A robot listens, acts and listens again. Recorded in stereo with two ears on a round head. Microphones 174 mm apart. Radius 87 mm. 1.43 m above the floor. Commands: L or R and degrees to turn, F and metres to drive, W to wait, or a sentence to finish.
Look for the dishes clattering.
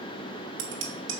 R65
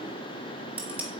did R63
R10
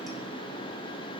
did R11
W
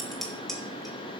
Facing the dishes clattering.